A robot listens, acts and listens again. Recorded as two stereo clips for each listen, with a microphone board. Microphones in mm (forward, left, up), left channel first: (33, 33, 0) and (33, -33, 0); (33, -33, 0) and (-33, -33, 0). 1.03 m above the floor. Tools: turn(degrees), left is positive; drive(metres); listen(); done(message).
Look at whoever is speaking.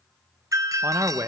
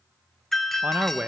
turn(degrees=-120)
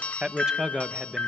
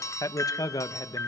turn(degrees=-10)
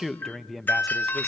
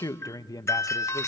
done("Facing the man speaking, under 1 m away.")